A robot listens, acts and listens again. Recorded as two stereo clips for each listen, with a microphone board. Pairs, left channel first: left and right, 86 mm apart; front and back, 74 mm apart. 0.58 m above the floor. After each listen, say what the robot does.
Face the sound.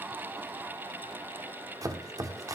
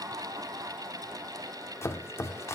Turn 50° right.
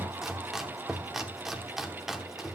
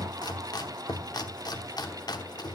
Found it: chopping, straight ahead.